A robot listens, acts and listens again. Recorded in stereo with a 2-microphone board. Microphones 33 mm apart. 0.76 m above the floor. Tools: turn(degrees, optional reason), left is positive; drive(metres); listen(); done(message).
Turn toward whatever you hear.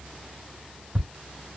turn(degrees=-30)
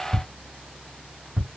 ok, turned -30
turn(degrees=-140, reason="So it is at 140° right.")
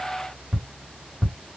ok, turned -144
done("Found it: ticking, straight ahead, 1 to 2 m away.")